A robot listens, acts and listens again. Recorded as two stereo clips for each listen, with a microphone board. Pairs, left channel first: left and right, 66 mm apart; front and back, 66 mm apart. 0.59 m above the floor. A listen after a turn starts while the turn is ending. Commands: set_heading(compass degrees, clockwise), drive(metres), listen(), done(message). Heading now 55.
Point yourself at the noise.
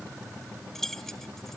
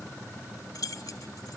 done("Found it: keys jangling, straight ahead.")